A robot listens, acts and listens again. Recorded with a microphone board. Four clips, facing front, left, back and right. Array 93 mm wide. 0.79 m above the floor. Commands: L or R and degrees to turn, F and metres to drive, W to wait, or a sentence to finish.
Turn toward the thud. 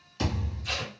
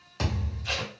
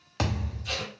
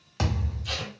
R165
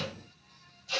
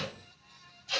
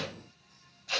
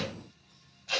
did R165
Facing where the thud came from. I can't hear it now.